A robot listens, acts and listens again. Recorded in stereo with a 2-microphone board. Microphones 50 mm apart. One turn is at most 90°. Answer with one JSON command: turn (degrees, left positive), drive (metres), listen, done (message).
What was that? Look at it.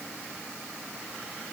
{"listen": true}
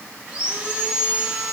{"turn": -20}
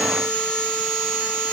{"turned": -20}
{"done": "Found it: sawing, straight ahead."}